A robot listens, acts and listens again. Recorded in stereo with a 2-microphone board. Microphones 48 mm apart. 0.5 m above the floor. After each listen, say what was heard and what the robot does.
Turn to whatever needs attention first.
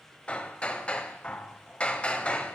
Keep listening.
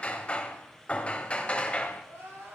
The crying: about 60° right or 120° right. Turn 60° right.
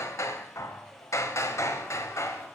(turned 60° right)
Keep listening.
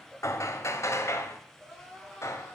Found it: crying, straight ahead.